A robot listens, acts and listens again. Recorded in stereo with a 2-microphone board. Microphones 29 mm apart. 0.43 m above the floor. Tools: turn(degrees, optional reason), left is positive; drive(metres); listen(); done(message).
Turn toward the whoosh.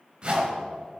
turn(degrees=-35, reason="The whoosh: about 35° right or 145° right.")
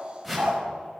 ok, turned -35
done("Found it: a whoosh, straight ahead.")